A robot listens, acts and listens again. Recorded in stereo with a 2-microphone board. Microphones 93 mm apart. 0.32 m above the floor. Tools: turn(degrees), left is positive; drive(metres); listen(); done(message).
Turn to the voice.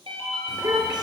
turn(degrees=-55)
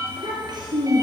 turn(degrees=-50)
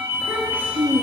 turn(degrees=-20)
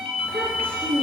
turn(degrees=15)
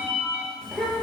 done("Facing the child speaking, 2 to 4 m away.")